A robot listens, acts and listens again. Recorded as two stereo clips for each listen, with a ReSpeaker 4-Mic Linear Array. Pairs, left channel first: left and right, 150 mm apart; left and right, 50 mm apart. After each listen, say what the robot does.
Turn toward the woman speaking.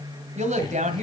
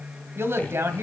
Turn 55° right.
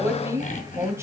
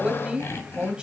Turn 20° right.
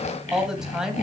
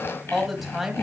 Facing the woman speaking, 2 to 4 m away.